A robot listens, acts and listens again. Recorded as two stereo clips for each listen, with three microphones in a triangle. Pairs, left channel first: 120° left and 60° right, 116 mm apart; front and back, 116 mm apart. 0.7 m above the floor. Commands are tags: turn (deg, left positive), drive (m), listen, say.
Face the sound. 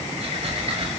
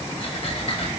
<turn deg="-30"/>
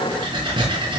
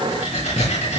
<turn deg="-15"/>
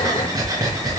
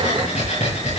<say>Facing the breathing, over 4 m away.</say>